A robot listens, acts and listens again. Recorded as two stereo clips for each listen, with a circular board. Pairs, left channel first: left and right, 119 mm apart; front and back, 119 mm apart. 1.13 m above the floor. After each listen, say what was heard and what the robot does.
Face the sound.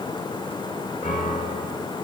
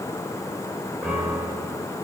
The piano: 95° left. Turn 95° left.
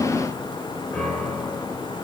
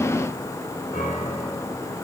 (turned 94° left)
Found it: a piano, straight ahead, 2 to 4 m away.